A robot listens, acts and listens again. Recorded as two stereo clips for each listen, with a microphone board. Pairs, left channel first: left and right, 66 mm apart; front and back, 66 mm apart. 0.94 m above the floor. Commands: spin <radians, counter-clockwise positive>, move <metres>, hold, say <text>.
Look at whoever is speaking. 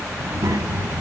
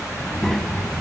spin -1.48
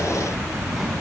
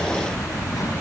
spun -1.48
say Found it: a child speaking, straight ahead.